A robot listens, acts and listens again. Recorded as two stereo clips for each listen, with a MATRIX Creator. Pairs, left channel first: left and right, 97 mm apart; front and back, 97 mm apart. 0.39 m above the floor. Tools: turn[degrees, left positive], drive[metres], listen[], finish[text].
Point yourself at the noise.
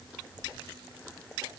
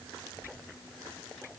Action: listen[]
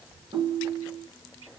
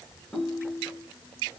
Thought: The ringtone: 85° right.
Action: turn[-85]
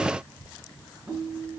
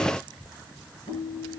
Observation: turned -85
Thought: The ringtone is now 25° right.
Action: turn[-25]
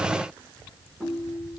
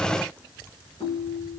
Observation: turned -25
Action: finish[Facing the ringtone.]